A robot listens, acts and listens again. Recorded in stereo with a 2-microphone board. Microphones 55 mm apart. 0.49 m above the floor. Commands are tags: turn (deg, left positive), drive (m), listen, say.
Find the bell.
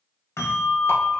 <turn deg="65"/>
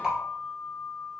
<turn deg="45"/>
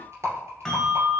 <say>Facing the bell.</say>